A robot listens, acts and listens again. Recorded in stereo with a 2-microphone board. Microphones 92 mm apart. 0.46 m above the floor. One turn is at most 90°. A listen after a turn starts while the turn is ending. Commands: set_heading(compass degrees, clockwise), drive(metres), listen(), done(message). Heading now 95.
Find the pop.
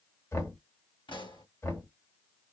set_heading(35)
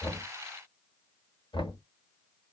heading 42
listen()
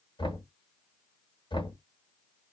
done("I heard a pop, but can't make it out now. It was about 10° left or 65° left.")